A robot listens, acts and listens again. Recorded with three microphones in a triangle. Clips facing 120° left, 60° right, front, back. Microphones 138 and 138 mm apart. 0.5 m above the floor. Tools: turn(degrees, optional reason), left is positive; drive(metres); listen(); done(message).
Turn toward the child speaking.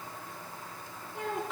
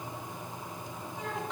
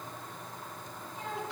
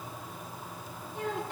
turn(degrees=150, reason="The child speaking: 150° left.")
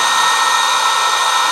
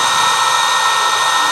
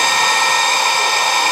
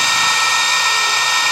listen()
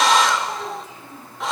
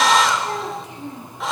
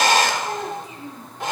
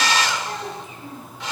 turn(degrees=-55, reason="The child speaking is now 55° right.")
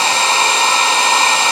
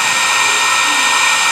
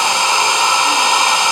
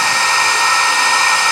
listen()
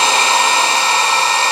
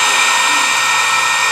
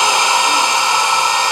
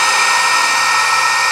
listen()
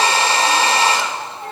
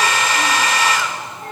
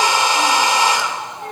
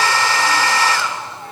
turn(degrees=-20, reason="The child speaking is now 20° right.")
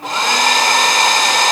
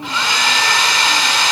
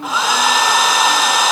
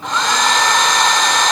listen()
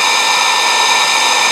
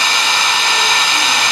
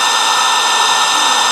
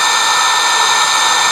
listen()
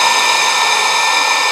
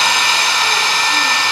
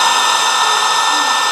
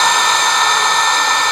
done("I heard a child speaking from this way, but can't make it out now.")